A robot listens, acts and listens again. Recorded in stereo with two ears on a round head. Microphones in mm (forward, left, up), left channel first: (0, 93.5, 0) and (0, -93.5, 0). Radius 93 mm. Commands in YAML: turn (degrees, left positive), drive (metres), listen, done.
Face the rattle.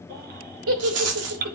turn: -90
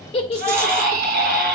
listen: true
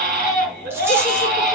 listen: true
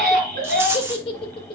turn: -10
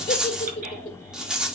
done: "Facing the rattle, 1 to 2 m away."